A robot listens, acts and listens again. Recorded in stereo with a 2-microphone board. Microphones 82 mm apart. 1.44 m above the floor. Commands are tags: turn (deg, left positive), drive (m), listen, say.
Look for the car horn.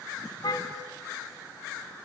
<turn deg="75"/>
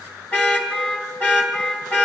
<turn deg="20"/>
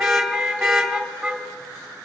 <say>Found it: a car horn, straight ahead.</say>